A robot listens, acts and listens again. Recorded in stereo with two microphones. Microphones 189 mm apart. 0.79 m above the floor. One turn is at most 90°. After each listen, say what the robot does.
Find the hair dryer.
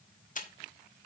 Keep listening.
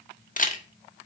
Keep listening.
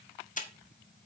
I can't make out a hair dryer, only a camera shutter.